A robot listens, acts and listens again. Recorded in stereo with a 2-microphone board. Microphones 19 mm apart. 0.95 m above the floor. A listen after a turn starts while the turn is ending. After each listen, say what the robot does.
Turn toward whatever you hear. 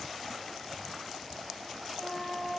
Turn 25° left.
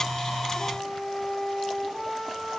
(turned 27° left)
Turn 130° left.
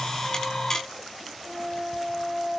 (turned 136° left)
Found it: a flute, straight ahead.